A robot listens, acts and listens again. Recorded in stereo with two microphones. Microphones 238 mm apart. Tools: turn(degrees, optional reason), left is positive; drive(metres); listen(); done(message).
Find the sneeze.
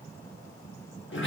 listen()
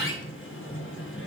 listen()
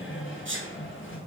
turn(degrees=-60, reason="The sneeze: about 60° right or 120° right.")
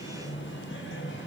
listen()
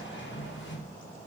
done("I heard a sneeze, but can't make it out now. It was about straight ahead or 60° right.")